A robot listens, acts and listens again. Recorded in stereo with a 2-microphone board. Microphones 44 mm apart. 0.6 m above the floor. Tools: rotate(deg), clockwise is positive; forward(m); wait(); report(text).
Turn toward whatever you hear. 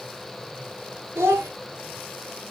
rotate(90)
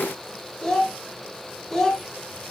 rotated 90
report("Found it: a child speaking, straight ahead, 1 to 2 m away.")